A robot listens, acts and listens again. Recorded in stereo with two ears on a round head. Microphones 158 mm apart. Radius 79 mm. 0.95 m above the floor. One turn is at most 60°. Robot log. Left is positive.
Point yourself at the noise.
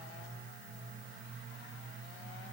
cmd idle
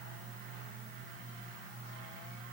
cmd idle
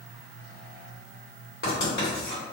note: The writing: about 60° left or 120° left.
cmd yaw +60
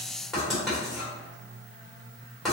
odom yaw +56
end: Facing the writing, 1 to 2 m away.